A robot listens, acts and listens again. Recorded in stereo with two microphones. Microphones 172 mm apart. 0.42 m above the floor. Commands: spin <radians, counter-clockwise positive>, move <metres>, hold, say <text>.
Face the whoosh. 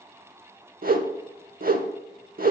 spin -1.13
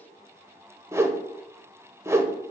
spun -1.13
spin -0.35
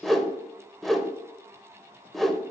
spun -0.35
say Found it: a whoosh, straight ahead, under 1 m away.